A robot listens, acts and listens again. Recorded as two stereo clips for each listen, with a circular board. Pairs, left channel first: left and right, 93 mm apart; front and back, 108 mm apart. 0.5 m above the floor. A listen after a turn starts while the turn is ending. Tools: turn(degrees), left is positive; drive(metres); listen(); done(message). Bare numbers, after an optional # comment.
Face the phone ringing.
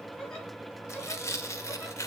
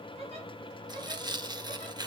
listen()
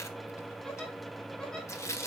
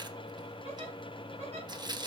listen()
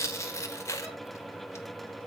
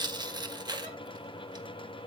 done("I can't make out a phone ringing to turn to.")